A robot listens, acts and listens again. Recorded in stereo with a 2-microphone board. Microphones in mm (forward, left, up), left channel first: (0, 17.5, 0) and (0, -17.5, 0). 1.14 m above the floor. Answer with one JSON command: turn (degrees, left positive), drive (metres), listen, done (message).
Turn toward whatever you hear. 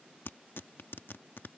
{"turn": 90}
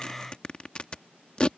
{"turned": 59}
{"turn": 30}
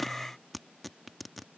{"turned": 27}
{"done": "Facing the tearing paper."}